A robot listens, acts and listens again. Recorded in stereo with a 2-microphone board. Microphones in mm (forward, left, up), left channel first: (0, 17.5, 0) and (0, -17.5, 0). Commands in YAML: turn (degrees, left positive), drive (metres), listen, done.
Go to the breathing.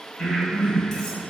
turn: 40
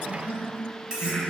turn: 95
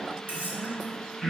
drive: 1.0
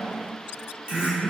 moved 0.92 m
turn: -10
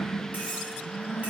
drive: 1.0
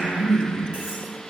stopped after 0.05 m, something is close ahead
done: "Arrived at the breathing, straight ahead."